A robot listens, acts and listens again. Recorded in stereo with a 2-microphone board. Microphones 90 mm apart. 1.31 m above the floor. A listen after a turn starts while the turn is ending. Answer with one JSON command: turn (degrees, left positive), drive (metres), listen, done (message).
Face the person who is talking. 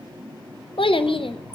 {"turn": 90}
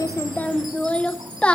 {"turn": 15}
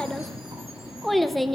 {"done": "Facing the child speaking, under 1 m away."}